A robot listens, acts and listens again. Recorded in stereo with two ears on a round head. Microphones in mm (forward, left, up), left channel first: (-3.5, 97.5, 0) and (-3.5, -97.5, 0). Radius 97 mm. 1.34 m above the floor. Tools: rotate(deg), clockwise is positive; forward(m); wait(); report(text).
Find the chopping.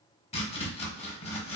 rotate(-25)
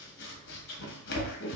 rotate(-130)
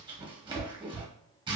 rotate(20)
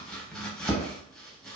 report("Facing the chopping, under 1 m away.")